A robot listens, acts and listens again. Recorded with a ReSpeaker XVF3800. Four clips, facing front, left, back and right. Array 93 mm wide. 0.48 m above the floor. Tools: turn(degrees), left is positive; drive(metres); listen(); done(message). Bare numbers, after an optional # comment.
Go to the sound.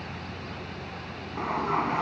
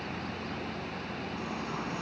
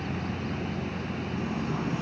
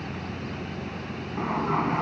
# The sliding door: 40° right.
turn(-40)
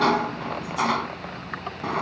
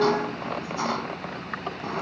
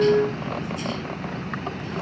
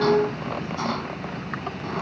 drive(1.0)
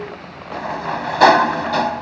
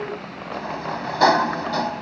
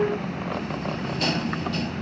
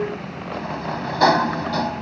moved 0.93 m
drive(1.0)
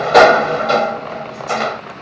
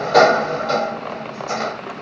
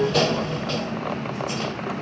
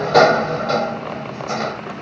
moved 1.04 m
drive(1.0)
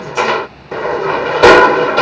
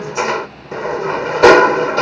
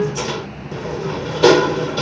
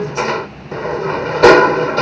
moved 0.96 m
drive(1.0)
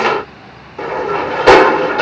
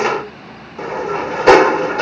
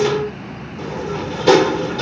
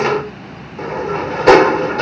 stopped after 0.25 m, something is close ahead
done("I am next to the sliding door.")